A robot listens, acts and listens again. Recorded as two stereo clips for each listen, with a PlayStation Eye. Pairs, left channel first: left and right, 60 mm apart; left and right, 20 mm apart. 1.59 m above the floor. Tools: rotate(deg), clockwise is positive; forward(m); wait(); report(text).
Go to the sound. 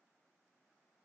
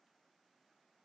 wait()
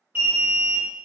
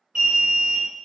rotate(30)
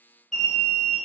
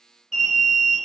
forward(1.0)
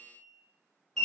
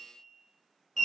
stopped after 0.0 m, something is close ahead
report("Something is in my way. I am facing the alarm but have not reached it.")